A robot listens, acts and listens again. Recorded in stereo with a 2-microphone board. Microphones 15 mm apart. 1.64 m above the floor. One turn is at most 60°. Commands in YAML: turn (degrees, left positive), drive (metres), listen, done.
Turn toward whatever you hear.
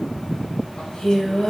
turn: 55
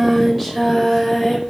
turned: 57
turn: -10
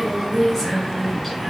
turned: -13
done: "Found it: singing, straight ahead."